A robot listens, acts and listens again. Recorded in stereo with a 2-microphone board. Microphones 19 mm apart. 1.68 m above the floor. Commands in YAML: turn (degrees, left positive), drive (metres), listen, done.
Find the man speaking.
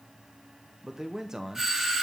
turn: -30
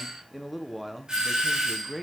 done: "Facing the man speaking, 1 to 2 m away."